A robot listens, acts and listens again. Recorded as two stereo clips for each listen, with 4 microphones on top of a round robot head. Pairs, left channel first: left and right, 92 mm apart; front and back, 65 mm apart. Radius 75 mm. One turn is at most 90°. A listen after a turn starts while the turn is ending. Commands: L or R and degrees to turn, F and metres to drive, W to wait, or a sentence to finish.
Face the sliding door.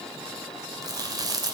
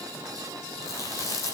W
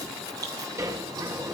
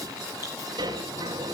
R90
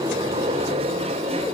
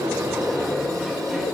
R90
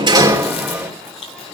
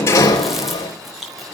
R15
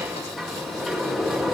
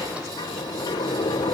Found it: a sliding door, straight ahead, 2 to 4 m away.